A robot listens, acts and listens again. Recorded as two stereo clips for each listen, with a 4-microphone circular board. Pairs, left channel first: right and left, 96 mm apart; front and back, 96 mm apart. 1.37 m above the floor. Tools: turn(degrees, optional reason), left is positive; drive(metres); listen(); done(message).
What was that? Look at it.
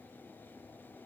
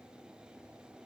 listen()
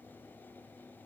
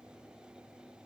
listen()
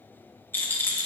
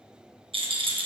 turn(degrees=-160, reason="The rattle: 160° right.")
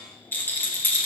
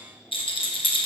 turn(degrees=-20, reason="The rattle is now 20° right.")
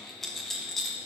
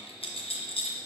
done("Found it: a rattle, straight ahead, under 1 m away.")